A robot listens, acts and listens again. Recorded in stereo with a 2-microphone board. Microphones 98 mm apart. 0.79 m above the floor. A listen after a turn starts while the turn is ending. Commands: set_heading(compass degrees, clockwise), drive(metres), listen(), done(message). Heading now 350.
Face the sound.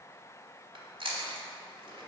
set_heading(50)
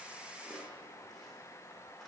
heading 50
listen()
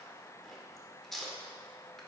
done("Found it: chewing, straight ahead.")